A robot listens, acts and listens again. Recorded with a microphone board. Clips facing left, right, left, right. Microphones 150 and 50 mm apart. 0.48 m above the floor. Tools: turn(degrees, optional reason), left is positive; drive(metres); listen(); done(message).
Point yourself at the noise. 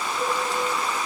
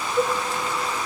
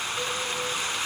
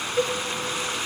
turn(degrees=-65, reason="The cowbell: about 65° right or 115° right.")
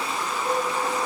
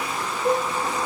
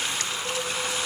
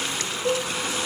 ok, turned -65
turn(degrees=-50, reason="So it is at 50° right.")
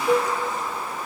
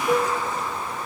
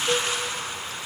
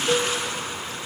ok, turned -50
done("Found it: a cowbell, straight ahead.")